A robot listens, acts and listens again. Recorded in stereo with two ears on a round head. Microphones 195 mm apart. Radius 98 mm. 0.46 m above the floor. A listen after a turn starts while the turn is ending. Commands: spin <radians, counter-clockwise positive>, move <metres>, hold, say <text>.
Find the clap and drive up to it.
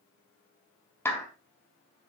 spin 0.52
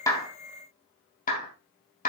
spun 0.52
spin 2.36
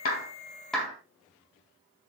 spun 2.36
move 1.0
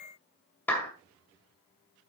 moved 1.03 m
spin 0.17
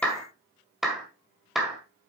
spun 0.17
move 1.0
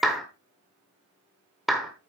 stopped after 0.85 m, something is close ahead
say Arrived at the clap, straight ahead.